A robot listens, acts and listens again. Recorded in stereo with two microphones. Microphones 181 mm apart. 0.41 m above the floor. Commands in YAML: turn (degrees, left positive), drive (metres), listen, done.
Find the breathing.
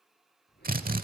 turn: 65
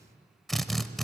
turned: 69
listen: true
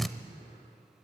listen: true
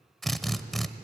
done: "I heard breathing, but can't make it out now. It was about straight ahead or 45° left."